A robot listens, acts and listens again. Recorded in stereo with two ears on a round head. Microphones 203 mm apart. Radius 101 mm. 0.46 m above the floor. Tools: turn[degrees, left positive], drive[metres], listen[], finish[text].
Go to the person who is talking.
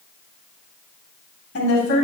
Thought: The woman speaking: about 55° left or 125° left.
Action: turn[55]
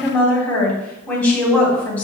Action: drive[1.0]
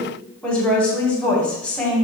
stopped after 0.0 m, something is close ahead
Action: finish[Something is in my way. I am facing the woman speaking but have not reached it.]